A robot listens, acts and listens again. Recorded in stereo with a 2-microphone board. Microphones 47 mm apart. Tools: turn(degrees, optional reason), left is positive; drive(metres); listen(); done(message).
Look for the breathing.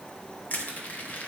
listen()
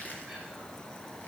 listen()
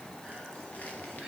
done("I can't make out breathing, only crushing.")